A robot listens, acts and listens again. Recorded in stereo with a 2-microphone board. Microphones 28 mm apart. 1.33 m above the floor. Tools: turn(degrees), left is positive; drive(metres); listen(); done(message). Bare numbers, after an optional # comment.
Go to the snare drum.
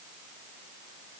listen()
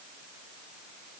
listen()
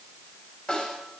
# The snare drum: about 35° left or 145° left.
turn(35)
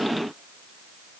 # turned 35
listen()
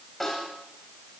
drive(1.0)
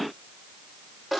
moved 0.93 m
# The snare drum is now 10° right.
turn(-10)
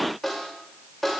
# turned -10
drive(1.0)
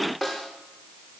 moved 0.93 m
# The snare drum is now 10° right.
turn(-10)
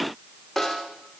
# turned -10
drive(1.0)
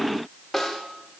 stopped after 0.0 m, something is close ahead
done("Arrived at the snare drum, straight ahead.")